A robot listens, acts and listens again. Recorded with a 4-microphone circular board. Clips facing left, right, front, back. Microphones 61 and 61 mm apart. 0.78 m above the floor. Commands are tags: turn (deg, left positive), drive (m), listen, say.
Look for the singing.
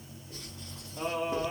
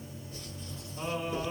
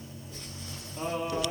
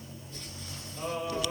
<turn deg="50"/>
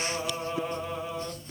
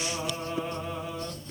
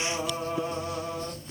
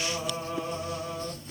<say>Facing the singing.</say>